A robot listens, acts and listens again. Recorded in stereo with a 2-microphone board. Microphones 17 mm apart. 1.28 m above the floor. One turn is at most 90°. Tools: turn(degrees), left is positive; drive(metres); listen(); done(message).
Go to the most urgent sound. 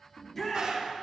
turn(degrees=30)
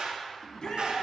turn(degrees=90)
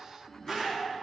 turn(degrees=55)
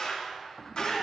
turn(degrees=-15)
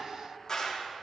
listen()
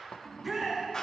drive(metres=1.0)
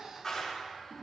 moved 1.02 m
listen()
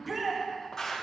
drive(metres=1.0)
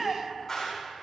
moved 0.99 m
drive(metres=1.0)
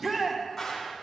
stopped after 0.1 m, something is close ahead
done("I am next to the shout.")